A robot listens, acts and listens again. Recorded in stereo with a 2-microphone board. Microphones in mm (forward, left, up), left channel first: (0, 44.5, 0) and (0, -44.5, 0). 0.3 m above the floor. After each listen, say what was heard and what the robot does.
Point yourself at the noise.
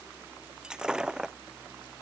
Turn 30° right.
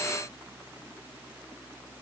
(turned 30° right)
Keep listening.
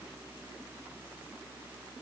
I heard breaking glass, but can't make it out now. It was about 20° left or 140° right.